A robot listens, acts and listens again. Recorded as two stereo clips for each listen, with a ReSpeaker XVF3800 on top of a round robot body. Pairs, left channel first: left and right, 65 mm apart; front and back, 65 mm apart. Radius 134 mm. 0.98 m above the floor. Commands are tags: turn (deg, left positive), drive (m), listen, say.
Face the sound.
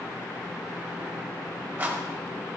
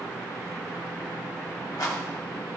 <turn deg="-25"/>
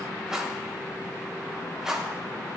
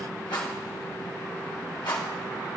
<turn deg="-10"/>
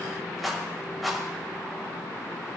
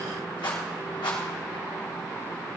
<say>Found it: a rattle, straight ahead, 2 to 4 m away.</say>